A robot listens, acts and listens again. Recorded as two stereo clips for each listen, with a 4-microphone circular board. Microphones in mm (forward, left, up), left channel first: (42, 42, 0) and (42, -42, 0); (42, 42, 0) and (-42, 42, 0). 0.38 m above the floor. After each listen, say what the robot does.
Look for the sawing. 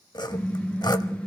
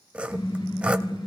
Turn 105° left.
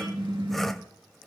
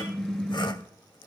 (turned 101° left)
Keep listening.
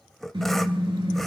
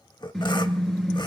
Facing the sawing, 1 to 2 m away.